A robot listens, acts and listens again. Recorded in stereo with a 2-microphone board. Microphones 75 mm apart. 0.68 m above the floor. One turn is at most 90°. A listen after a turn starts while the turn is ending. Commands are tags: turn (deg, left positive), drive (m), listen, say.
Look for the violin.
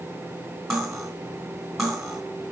<listen/>
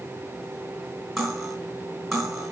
<listen/>
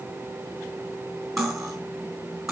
<say>I can't make out a violin, only cutlery clinking.</say>